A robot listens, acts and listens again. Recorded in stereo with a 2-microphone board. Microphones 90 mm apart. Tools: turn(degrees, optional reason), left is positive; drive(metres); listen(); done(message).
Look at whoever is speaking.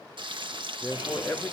turn(degrees=30)
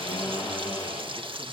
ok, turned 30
listen()
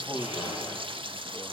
turn(degrees=20, reason="The man speaking: about 20° left or 160° left.")
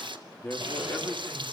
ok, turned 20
turn(degrees=20, reason="The man speaking: about 20° left or 160° left.")
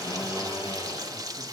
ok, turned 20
listen()
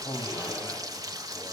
turn(degrees=145, reason="So it is at 145° left.")
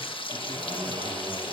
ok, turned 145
listen()
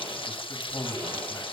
turn(degrees=30, reason="The man speaking is now 30° left.")
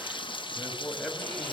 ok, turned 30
turn(degrees=-10, reason="The man speaking is now 10° right.")
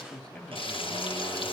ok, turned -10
done("Facing the man speaking, 2 to 4 m away.")